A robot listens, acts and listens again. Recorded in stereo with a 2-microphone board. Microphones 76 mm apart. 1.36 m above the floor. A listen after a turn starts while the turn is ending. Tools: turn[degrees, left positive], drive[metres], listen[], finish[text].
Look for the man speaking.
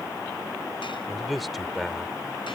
Action: turn[30]
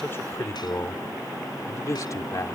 Thought: So it is at 140° left.
Action: turn[140]
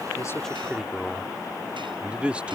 Thought: The man speaking is now 15° right.
Action: turn[-15]
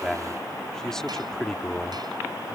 Action: finish[Found it: a man speaking, straight ahead.]